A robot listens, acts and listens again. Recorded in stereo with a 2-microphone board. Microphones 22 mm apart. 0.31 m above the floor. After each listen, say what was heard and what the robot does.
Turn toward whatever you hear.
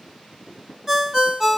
The ringtone: about 15° right or 165° right. Turn 15° right.
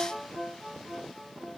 So it is at 150° right. Turn 150° right.
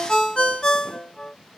The ringtone is now 35° left. Turn 35° left.
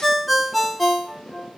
Facing the ringtone, under 1 m away.